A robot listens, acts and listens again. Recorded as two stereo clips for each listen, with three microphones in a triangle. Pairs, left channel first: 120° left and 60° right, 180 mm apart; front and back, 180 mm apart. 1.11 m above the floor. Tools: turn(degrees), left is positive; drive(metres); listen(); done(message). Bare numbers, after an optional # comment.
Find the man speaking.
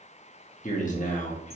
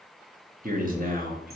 # The man speaking: 155° left.
turn(155)
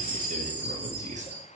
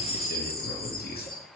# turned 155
# The man speaking is now 20° right.
turn(-20)
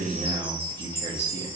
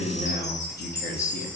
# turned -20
done("Facing the man speaking.")